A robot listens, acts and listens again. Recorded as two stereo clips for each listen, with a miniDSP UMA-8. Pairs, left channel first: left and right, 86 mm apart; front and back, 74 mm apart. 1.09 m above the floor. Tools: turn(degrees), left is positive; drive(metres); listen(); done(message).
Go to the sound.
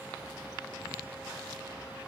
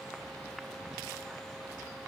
listen()
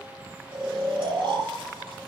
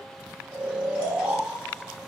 turn(degrees=-110)
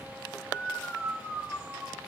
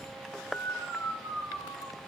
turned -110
drive(metres=1.0)
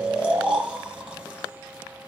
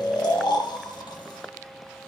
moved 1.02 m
turn(degrees=-10)
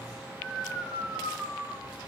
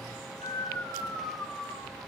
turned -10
drive(metres=1.0)
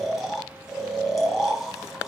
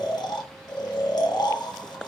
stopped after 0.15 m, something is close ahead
done("I am next to the snoring.")